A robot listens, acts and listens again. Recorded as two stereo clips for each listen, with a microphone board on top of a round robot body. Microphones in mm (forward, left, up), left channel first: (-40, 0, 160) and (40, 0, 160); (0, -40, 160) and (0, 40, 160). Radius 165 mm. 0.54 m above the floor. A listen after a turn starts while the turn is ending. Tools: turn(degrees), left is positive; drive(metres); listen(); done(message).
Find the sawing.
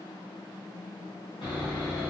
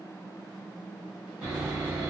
turn(degrees=165)
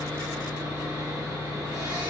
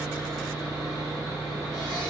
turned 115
turn(degrees=50)
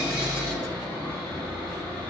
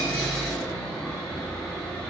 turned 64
turn(degrees=-15)
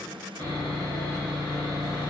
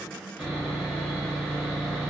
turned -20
done("Found it: sawing, straight ahead.")